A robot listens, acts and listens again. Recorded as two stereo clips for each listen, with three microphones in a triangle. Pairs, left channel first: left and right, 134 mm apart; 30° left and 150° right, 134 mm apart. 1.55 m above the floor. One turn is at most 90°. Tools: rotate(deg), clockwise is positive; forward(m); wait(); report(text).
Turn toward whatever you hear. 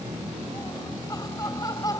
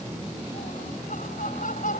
rotate(-30)
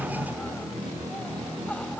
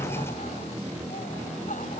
rotate(-10)
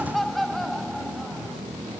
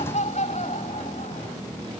report("Facing the laughter.")